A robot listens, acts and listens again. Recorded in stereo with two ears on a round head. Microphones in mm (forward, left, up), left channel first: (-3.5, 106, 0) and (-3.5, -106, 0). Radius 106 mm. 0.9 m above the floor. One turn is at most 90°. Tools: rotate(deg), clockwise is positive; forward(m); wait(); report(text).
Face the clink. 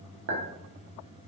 rotate(55)
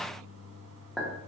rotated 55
report("Facing the clink.")